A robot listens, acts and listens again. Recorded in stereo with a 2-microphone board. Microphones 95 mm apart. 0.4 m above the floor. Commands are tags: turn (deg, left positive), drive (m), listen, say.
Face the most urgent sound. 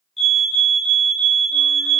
<turn deg="30"/>
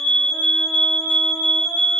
<turn deg="-30"/>
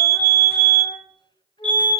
<turn deg="15"/>
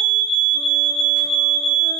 <say>Facing the fire alarm, 2 to 4 m away.</say>